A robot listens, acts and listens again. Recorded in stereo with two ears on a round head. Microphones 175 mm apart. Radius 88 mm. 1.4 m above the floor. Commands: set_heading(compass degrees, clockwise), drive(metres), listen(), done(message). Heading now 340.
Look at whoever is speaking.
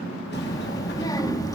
set_heading(320)
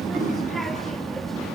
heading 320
done("Found it: a child speaking, straight ahead, 1 to 2 m away.")